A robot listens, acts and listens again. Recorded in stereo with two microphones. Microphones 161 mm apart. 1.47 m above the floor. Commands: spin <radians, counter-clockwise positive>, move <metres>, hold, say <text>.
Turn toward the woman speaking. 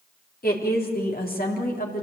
spin 1.13
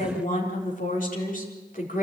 spin 1.05
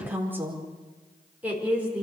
spin -0.17
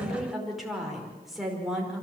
say Found it: a woman speaking, straight ahead.